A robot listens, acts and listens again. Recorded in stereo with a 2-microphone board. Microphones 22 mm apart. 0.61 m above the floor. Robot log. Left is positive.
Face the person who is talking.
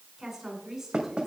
note: The woman speaking: about 25° right or 155° right.
cmd yaw -25
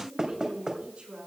note: So it is at 125° right.
cmd yaw -125
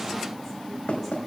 cmd idle
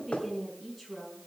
note: The woman speaking is now 15° left.
cmd yaw +15
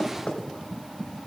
cmd idle
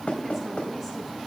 cmd idle
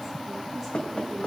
end: I heard a woman speaking from this way, but can't make it out now.